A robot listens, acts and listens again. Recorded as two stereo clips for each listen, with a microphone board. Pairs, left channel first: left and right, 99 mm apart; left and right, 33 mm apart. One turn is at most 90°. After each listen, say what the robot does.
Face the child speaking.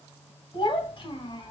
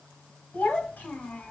Turn 55° left.
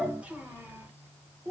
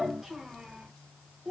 Turn 35° right.
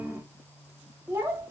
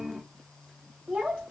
Turn 30° right.
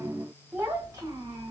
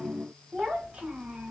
Turn 30° right.
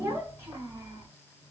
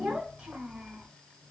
Turn 20° right.
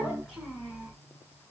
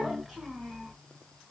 Facing the child speaking.